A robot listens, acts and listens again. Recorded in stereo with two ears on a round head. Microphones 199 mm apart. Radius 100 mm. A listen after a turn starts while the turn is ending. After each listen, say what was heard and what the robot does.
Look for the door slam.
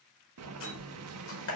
The door slam: about 65° left or 115° left. Turn 65° left.
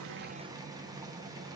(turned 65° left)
Keep listening.
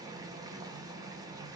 I heard a door slam, but can't make it out now. It was about straight ahead or 50° left.